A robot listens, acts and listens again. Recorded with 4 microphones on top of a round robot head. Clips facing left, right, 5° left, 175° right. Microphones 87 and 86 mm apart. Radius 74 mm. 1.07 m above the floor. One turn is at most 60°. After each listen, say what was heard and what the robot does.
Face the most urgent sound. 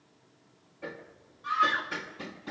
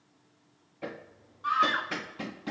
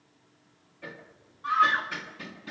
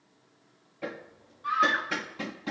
The scream: 55° right. Turn 55° right.
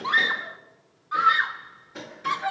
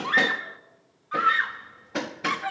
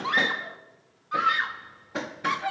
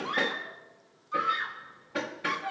The scream is now 15° left. Turn 15° left.
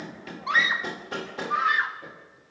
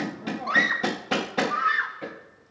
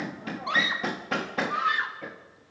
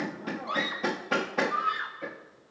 Found it: a scream, straight ahead.